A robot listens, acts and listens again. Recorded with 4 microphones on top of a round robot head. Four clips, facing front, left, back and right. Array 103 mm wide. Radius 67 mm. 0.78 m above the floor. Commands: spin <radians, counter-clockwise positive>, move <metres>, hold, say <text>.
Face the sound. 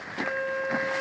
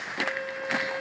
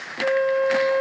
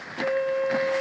spin -2.88
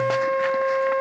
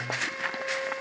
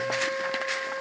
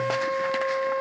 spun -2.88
spin -0.35
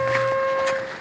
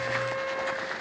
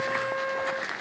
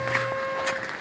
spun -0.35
say Facing the flute.